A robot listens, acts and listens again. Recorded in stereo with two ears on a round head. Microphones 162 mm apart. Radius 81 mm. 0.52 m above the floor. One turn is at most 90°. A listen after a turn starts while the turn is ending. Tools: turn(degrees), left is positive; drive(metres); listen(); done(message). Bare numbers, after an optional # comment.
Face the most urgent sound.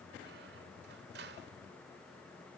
listen()
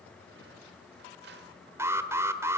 # The alarm: about 15° right or 165° right.
turn(-15)
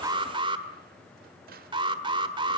# So it is at 150° right.
turn(-90)
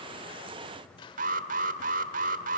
# The alarm is now 55° right.
turn(-55)
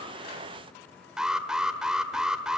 done("Found it: an alarm, straight ahead, 1 to 2 m away.")